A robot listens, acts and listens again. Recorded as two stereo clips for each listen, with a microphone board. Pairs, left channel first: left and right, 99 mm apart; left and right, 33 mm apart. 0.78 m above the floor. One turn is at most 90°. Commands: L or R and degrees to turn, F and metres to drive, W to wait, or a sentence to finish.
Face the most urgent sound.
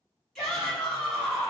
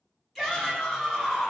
L30
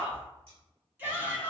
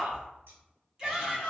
R25
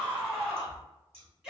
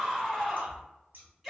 R10
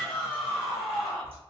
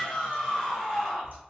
Found it: a shout, straight ahead.